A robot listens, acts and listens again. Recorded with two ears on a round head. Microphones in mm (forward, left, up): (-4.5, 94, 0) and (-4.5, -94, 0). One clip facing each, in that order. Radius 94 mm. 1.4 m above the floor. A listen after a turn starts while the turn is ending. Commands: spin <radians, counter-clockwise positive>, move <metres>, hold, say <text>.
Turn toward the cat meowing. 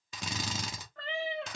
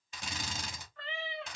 spin 0.79
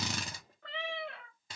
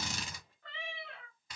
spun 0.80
spin 0.87
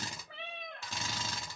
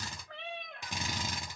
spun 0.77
say Facing the cat meowing, 1 to 2 m away.